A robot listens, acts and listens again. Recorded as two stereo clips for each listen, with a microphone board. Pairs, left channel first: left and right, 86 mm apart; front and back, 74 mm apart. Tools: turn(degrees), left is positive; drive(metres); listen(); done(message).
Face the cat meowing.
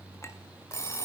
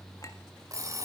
listen()
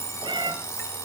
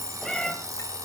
turn(degrees=-80)
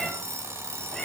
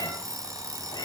done("Facing the cat meowing, 2 to 4 m away.")